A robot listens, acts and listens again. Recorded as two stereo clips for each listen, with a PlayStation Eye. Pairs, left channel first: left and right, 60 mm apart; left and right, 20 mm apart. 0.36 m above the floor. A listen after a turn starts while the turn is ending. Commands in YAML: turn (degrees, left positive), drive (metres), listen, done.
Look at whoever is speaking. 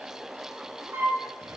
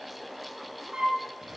listen: true
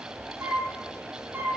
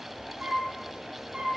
listen: true
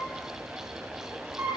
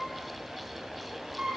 done: "I can't make out anyone speaking to turn to."